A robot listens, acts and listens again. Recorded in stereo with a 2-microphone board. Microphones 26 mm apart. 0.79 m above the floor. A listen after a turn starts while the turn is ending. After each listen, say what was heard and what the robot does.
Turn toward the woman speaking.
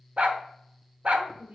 Turn 90° right.
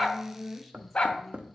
Found it: a woman speaking, straight ahead.